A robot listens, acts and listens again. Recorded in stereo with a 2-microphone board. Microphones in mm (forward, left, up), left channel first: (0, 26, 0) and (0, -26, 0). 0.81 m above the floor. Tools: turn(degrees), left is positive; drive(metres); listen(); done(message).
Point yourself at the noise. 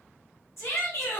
turn(degrees=65)
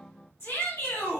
turn(degrees=55)
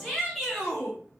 done("Facing the shout.")